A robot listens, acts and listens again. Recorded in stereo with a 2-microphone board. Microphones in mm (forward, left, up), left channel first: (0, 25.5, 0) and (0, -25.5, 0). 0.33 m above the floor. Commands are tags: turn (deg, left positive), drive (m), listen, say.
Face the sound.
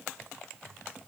<listen/>
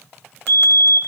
<turn deg="40"/>
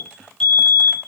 <say>Found it: a fire alarm, straight ahead, 2 to 4 m away.</say>